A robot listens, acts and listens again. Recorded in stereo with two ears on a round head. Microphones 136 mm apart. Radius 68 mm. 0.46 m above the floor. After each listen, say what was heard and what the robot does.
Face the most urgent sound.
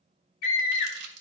The scream: about 60° left or 120° left. Turn 60° left.
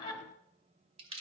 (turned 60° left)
So it is at 35° left. Turn 35° left.
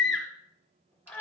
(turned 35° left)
Facing the scream, 2 to 4 m away.